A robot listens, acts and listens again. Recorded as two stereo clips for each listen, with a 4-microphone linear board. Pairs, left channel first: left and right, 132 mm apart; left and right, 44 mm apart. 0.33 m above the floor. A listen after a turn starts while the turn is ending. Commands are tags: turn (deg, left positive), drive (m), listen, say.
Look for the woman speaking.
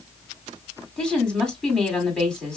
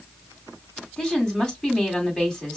<turn deg="30"/>
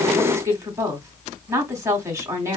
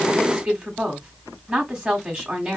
<turn deg="-25"/>
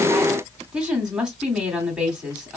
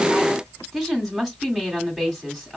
<turn deg="-10"/>
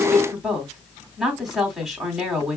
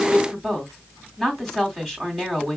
<say>Found it: a woman speaking, straight ahead.</say>